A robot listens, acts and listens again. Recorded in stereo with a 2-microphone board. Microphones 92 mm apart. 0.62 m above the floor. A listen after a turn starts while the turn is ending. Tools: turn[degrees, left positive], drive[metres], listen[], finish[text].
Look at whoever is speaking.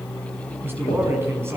Thought: The man speaking: about 25° right or 155° right.
Action: turn[-25]
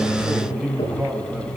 Action: finish[Facing the man speaking, over 4 m away.]